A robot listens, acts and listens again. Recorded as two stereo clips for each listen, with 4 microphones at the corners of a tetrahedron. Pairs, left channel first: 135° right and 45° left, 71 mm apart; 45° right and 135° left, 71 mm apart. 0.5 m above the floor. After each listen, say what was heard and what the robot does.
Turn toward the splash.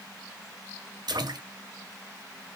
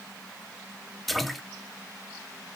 The splash: 45° left. Turn 45° left.
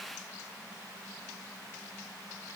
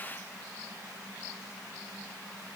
Facing where the splash came from. I can't hear it now.